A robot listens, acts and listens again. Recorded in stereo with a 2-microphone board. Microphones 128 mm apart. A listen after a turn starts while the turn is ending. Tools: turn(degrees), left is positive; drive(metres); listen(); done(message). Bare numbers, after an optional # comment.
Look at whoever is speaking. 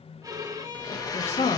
# The woman speaking: about 60° left or 120° left.
turn(60)
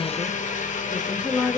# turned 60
done("Found it: a woman speaking, straight ahead, 1 to 2 m away.")